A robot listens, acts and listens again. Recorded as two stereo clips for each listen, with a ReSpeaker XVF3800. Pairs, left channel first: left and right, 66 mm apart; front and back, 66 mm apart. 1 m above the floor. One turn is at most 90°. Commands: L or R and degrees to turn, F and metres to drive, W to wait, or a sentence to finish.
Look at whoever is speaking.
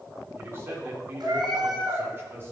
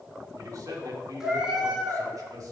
R90
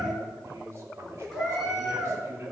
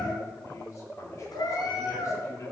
R40
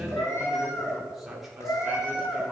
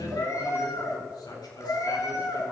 Found it: a man speaking, straight ahead.